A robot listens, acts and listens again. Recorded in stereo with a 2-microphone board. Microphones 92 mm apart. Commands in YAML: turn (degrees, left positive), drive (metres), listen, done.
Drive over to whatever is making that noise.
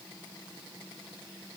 listen: true
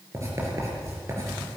turn: -30
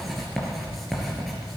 drive: 1.0
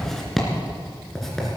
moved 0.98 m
drive: 1.0
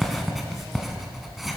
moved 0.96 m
drive: 1.0
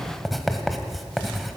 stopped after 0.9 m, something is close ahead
done: "Arrived at the writing, straight ahead."